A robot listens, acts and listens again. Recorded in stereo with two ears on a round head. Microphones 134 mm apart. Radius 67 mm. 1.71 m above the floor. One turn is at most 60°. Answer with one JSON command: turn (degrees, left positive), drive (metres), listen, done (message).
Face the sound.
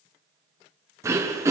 {"turn": -20}
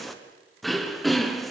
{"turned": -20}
{"done": "Found it: throat clearing, straight ahead, 1 to 2 m away."}